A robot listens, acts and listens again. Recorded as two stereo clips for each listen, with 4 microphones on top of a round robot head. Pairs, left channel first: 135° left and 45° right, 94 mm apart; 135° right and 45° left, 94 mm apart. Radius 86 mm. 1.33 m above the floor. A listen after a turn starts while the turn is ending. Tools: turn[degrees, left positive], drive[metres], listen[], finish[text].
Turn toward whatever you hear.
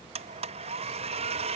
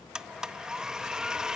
Thought: The blender: 40° right.
Action: turn[-40]
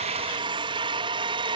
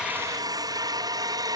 Action: finish[Found it: a blender, straight ahead.]